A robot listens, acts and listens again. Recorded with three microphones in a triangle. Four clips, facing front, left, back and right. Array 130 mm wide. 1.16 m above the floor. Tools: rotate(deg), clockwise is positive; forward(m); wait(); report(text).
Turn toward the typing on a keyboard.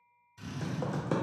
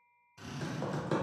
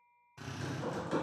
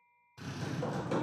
rotate(-20)
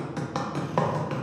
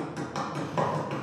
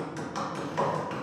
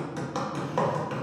report("Found it: typing on a keyboard, straight ahead, under 1 m away.")